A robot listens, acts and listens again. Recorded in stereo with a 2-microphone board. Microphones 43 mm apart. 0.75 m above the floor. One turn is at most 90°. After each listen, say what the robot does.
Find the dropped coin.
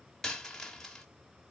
Turn 30° left.
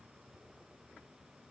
Keep listening.
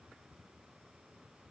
I heard a dropped coin, but can't make it out now. It was about 20° right or 140° left.